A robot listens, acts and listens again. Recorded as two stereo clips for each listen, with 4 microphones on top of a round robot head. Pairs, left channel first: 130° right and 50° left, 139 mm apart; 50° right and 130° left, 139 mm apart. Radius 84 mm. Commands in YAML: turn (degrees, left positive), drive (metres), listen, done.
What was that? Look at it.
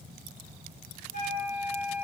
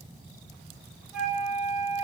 turn: -140
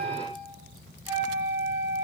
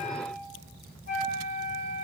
turn: -15
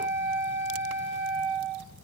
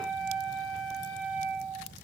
done: "Facing the flute."